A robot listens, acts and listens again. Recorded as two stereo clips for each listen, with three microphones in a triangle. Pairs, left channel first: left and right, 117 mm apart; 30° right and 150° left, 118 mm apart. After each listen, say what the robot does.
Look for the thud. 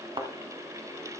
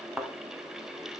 Turn 125° right.
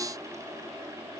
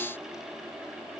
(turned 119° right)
I heard a thud from this way, but can't make it out now.